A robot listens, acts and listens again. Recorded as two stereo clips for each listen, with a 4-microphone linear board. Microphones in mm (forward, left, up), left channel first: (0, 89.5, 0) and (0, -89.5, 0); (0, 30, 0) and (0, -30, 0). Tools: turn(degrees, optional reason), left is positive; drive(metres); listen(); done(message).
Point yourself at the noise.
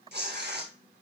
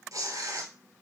turn(degrees=-70, reason="The tearing paper: about 70° right or 110° right.")
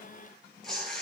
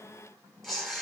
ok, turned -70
done("Found it: tearing paper, straight ahead.")